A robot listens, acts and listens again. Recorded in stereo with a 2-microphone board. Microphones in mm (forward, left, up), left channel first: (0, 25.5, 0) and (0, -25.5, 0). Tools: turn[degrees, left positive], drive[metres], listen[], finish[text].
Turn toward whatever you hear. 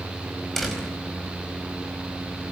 Action: turn[30]
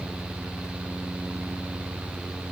Action: listen[]
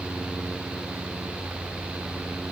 Action: finish[I heard a door slam, but can't make it out now. It was about 25° right or 145° left.]